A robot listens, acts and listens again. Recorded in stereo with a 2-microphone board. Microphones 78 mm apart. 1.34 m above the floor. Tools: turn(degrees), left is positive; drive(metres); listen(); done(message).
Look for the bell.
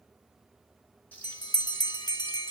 turn(degrees=60)
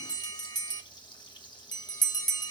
turn(degrees=60)
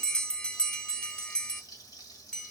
turn(degrees=10)
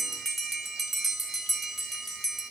done("Facing the bell.")